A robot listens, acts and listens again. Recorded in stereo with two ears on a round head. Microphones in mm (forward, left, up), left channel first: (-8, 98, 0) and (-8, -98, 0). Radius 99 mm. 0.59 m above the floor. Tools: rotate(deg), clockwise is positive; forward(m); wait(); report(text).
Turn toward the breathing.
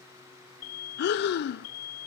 rotate(-50)
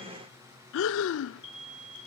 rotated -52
rotate(-75)
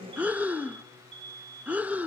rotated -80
report("Found it: breathing, straight ahead.")